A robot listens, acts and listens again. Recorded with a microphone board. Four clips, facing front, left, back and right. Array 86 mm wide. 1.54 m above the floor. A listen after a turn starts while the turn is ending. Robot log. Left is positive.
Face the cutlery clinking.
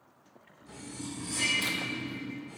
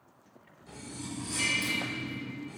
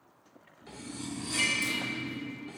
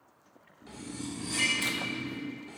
note: The cutlery clinking: 150° right.
cmd yaw -150
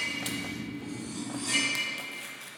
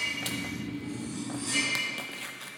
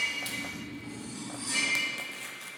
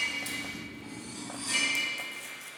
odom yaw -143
end: Facing the cutlery clinking, 2 to 4 m away.